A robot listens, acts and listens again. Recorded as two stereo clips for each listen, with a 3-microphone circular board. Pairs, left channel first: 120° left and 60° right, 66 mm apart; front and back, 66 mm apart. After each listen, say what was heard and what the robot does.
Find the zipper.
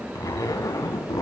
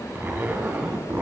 The zipper: 125° left. Turn 125° left.
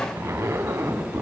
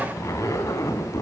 The zipper is now 20° right. Turn 20° right.
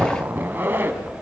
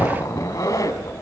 Facing the zipper.